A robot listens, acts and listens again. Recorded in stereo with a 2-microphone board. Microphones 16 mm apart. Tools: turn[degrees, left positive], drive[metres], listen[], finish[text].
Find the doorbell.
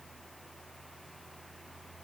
Action: listen[]
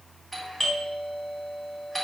Action: turn[30]
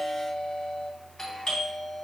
Thought: So it is at 145° left.
Action: turn[145]
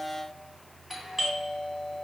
Thought: The doorbell is now 10° right.
Action: turn[-10]
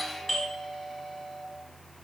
Action: finish[Facing the doorbell.]